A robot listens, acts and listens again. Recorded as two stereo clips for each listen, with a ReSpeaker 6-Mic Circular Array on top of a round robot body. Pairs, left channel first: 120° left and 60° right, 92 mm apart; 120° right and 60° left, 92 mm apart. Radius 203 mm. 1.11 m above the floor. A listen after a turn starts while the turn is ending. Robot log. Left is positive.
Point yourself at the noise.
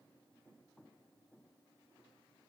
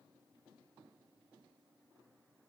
cmd idle
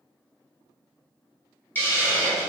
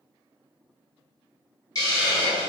note: The hiss: 170° right.
cmd yaw -170
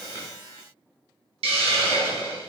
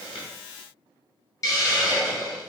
note: The hiss is now 60° right.
cmd yaw -60
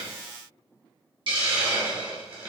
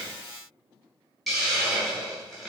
note: The hiss is now 30° right.
cmd yaw -30
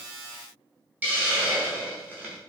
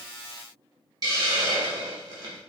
note: The hiss is now 15° left.
cmd yaw +15
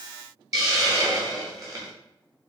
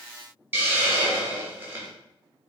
end: Facing the hiss.